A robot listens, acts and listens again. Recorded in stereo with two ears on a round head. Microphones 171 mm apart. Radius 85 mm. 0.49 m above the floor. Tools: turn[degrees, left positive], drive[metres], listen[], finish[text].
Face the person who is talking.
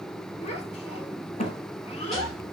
Thought: The child speaking: about 35° left or 145° left.
Action: turn[35]
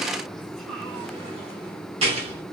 Action: listen[]
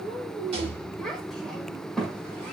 Action: finish[Found it: a child speaking, straight ahead.]